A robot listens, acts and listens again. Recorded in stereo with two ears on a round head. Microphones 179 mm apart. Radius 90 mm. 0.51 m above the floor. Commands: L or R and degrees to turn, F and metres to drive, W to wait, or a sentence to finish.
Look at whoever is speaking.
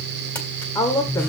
L15
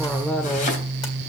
Found it: a woman speaking, straight ahead.